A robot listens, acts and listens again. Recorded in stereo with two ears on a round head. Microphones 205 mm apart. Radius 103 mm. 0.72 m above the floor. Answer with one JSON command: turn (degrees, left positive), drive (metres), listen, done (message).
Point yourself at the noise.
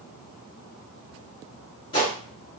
{"turn": 25}
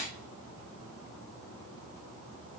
{"listen": true}
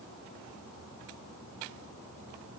{"done": "I heard a gunshot, but can't make it out now. It was about straight ahead or 130° left."}